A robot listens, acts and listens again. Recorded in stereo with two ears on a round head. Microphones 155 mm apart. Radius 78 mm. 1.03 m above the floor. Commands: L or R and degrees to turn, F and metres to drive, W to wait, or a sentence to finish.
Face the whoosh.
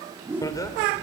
R30
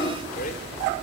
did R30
W
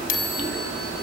W
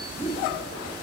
L20
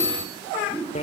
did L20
L10
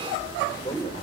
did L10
Found it: a whoosh, straight ahead.